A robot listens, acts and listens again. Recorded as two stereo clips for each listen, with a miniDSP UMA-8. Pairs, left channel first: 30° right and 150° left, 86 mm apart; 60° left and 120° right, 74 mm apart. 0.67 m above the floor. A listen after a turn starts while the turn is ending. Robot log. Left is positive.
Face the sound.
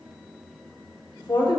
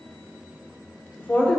note: The woman speaking: 10° right.
cmd yaw -10
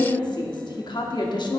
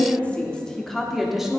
note: The woman speaking is now 40° right.
cmd yaw -40
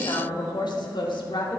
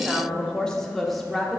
note: The woman speaking is now 35° right.
cmd yaw -35
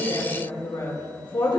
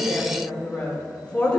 note: The woman speaking is now 15° right.
cmd yaw -15
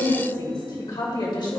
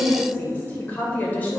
end: Found it: a woman speaking, straight ahead, 2 to 4 m away.